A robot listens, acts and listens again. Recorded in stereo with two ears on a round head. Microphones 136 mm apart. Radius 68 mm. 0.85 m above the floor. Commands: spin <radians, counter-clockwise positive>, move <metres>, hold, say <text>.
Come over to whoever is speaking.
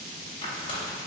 hold
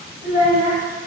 spin -0.79
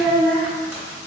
spin -1.48
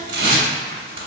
hold
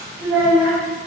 move 1.0
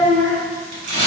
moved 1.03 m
spin 0.17
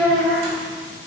move 1.0
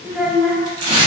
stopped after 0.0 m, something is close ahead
say I am next to the child speaking.